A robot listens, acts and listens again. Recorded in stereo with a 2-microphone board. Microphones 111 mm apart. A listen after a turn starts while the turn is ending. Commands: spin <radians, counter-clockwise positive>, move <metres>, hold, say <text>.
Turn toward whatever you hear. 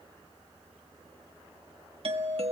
spin -1.05
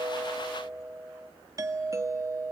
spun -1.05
spin -0.52
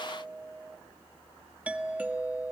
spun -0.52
spin -0.26
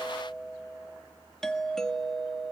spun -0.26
say Found it: a doorbell, straight ahead, 1 to 2 m away.